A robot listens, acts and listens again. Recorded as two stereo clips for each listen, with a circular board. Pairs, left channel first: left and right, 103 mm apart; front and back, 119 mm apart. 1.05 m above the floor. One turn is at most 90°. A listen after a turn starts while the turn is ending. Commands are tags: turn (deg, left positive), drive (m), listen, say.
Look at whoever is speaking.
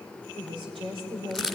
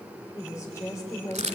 <turn deg="-65"/>
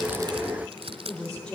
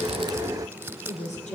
<turn deg="10"/>
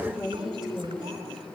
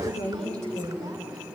<say>Found it: a woman speaking, straight ahead, over 4 m away.</say>